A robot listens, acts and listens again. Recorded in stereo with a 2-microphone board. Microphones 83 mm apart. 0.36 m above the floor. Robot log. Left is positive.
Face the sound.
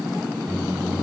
note: The microwave: about 60° right or 120° right.
cmd yaw -60
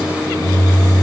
end: Found it: a microwave, straight ahead, 2 to 4 m away.